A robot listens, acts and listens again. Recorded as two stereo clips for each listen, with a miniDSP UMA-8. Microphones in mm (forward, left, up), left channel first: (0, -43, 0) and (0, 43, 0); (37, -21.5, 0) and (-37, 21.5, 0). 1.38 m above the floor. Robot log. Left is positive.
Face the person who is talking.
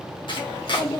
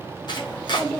note: The child speaking: 95° right.
cmd yaw -95
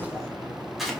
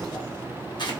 note: The child speaking is now 30° right.
cmd yaw -30
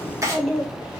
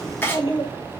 end: Found it: a child speaking, straight ahead, 1 to 2 m away.